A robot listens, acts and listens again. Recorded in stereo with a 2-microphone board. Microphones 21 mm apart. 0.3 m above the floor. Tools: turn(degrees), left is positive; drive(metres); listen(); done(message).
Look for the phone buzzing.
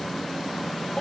listen()
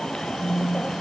turn(degrees=30)
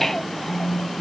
turn(degrees=140)
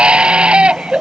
listen()
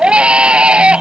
listen()
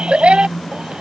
turn(degrees=30)
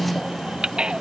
done("Found it: a phone buzzing, straight ahead.")